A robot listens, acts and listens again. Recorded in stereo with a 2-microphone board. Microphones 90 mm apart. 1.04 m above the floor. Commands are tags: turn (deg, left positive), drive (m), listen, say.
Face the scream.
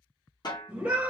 <turn deg="-30"/>
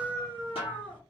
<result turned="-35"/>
<turn deg="20"/>
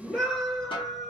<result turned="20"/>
<say>Found it: a scream, straight ahead.</say>